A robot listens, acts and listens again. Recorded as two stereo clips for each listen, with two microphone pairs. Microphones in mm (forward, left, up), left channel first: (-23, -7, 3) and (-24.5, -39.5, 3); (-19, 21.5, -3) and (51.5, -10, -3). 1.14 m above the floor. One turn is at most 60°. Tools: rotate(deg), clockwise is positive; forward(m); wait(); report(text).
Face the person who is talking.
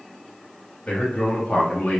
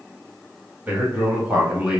rotate(-55)
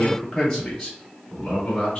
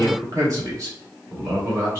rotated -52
rotate(-30)
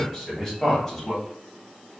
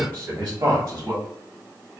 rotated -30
report("Found it: a man speaking, straight ahead.")